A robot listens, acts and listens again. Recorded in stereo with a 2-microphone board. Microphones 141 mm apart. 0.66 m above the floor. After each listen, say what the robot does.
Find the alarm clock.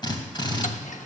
Keep listening.
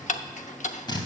Keep listening.
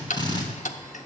I can't make out an alarm clock to turn to.